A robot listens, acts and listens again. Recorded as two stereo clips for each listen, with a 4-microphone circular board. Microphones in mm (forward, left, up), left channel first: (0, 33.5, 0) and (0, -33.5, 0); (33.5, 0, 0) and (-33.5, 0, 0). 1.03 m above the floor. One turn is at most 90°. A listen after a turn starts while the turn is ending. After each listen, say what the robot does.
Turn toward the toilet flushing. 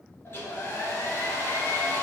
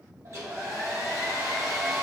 Keep listening.
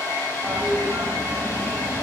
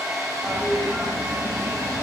Turn 90° right.
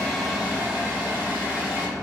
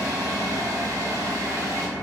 Turn 45° right.
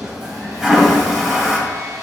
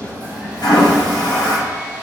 Found it: a toilet flushing, straight ahead.